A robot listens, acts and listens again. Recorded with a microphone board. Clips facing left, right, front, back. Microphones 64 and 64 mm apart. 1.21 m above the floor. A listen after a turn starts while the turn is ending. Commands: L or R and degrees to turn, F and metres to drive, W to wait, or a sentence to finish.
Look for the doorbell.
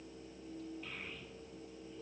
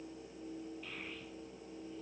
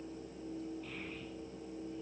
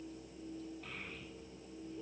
W
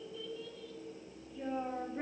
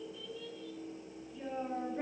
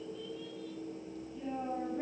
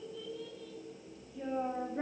W
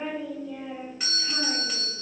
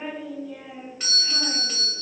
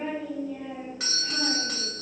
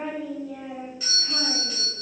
Found it: a doorbell, straight ahead, 2 to 4 m away.